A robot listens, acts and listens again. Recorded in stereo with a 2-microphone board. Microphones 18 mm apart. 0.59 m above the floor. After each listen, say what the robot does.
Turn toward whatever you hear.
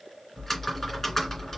Turn 30° left.
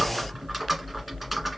Found it: typing on a keyboard, straight ahead, 2 to 4 m away.